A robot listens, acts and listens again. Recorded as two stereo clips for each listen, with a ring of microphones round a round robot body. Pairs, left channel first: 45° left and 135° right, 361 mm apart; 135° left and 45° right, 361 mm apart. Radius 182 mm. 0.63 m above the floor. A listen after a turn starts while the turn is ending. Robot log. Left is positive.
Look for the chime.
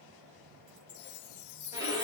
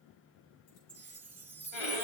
note: The chime: 40° left.
cmd yaw +40
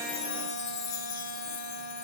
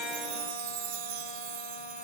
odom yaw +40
end: Found it: a chime, straight ahead, under 1 m away.